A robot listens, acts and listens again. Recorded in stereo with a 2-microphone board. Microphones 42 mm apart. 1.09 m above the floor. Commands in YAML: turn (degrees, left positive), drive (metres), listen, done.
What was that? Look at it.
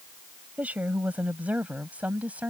turn: -35
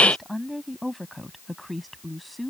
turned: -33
done: "Found it: a woman speaking, straight ahead."